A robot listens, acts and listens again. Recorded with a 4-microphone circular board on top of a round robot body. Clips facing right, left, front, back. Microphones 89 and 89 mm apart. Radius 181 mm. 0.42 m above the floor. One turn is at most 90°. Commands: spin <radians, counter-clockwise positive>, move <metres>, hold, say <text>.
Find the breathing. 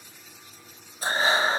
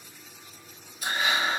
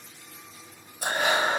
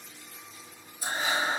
spin -0.52
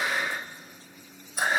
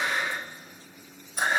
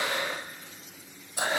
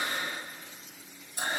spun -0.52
say Facing the breathing, under 1 m away.